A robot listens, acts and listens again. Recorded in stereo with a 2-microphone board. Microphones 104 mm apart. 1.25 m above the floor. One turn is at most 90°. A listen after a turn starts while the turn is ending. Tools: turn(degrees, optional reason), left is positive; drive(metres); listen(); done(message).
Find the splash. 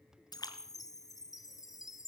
turn(degrees=40, reason="The splash: about 40° left or 140° left.")
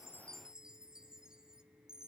listen()
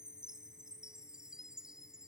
done("I heard a splash, but can't make it out now. It was about straight ahead or 100° left.")